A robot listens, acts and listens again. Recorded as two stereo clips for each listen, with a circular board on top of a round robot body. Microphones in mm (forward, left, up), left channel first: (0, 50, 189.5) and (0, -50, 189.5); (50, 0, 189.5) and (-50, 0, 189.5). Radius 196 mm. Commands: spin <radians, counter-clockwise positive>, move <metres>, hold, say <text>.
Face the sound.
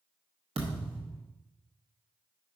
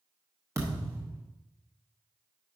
spin -2.01
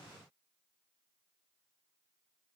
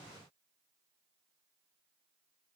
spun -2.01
say I heard a thud from this way, but can't make it out now.